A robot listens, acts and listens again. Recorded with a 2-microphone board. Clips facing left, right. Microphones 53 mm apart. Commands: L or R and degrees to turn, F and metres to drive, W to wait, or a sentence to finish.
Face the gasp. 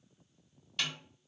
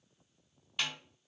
W
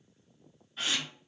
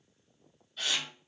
L25
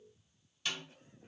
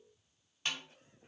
W
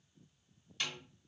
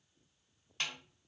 I heard a gasp, but can't make it out now. It was about straight ahead or 130° left.